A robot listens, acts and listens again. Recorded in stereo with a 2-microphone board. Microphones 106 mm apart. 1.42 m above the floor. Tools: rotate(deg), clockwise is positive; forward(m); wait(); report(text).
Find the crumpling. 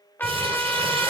rotate(70)
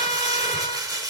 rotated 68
rotate(40)
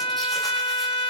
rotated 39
wait()
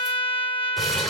report("Found it: crumpling, straight ahead.")